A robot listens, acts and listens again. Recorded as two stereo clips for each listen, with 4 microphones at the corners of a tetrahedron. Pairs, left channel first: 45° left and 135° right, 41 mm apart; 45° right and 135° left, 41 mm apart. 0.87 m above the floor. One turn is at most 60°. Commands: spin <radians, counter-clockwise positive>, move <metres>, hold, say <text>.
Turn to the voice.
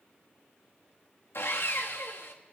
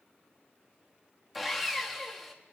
hold
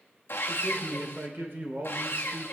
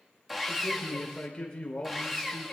spin -1.05
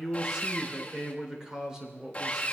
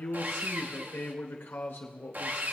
spin -1.05
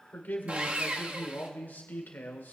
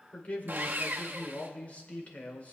spin 0.17
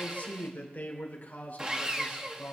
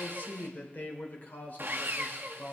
say Facing the man speaking, 2 to 4 m away.